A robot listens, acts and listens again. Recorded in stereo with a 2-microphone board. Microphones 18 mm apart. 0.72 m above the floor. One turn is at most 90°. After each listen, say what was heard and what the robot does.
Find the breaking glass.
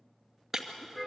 The breaking glass: about 15° right or 165° right. Turn 15° right.
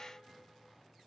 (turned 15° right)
Keep listening.
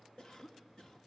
I heard breaking glass, but can't make it out now. It was about straight ahead or 150° right.